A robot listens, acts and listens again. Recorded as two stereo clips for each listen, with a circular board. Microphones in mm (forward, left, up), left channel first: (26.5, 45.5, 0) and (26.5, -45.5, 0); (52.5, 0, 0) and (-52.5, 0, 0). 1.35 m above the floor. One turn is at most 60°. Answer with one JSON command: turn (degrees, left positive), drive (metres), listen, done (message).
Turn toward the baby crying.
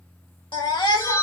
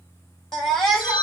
{"turn": 60}
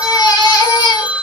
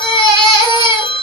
{"turn": 40}
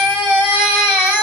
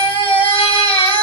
{"turn": -25}
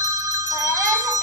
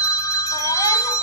{"listen": true}
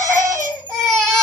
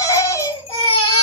{"done": "Found it: a baby crying, straight ahead, 2 to 4 m away."}